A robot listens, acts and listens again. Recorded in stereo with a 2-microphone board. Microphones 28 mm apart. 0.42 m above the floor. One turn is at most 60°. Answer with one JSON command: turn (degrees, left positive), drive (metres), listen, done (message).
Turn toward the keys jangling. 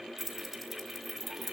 {"turn": -30}
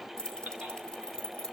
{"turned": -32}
{"turn": 25}
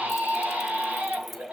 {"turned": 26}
{"listen": true}
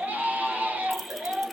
{"listen": true}
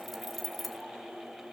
{"done": "Facing the keys jangling, 1 to 2 m away."}